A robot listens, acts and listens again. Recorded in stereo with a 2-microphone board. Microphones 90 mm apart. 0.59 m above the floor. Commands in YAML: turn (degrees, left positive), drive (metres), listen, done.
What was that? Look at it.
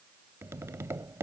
turn: -35
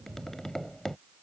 done: "Facing the tapping."